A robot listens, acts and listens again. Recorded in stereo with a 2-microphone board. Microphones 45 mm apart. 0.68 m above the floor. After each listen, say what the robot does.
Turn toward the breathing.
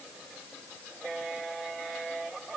Keep listening.
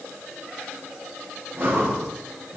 Turn 45° right.
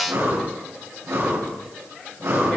Turn 90° right.
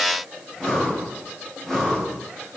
Facing the breathing, over 4 m away.